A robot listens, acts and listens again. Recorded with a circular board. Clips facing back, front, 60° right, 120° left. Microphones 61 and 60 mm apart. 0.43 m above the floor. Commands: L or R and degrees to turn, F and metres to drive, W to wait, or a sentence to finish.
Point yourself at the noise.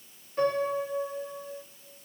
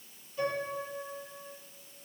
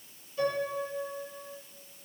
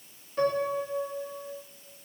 L145
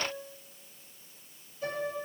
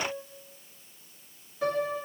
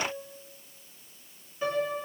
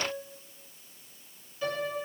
Facing the piano.